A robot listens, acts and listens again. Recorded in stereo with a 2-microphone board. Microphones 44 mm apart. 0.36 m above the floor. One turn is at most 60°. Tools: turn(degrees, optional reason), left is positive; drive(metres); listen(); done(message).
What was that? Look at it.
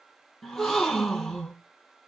turn(degrees=30)
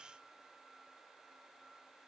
listen()
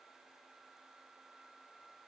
done("I heard a gasp, but can't make it out now. It was about 25° right or 145° left.")